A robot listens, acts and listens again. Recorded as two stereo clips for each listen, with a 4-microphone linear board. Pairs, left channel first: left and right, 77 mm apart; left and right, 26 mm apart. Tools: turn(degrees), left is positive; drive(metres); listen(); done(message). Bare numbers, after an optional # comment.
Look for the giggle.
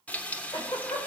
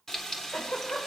# The giggle: about 65° left or 115° left.
turn(65)
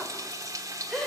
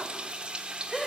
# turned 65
done("Found it: a giggle, straight ahead.")